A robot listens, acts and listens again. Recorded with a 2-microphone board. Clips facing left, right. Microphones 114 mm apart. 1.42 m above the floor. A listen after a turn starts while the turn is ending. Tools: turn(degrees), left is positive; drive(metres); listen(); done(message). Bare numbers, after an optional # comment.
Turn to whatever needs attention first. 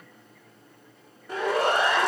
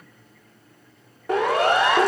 turn(-90)
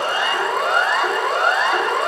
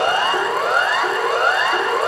done("Facing the siren.")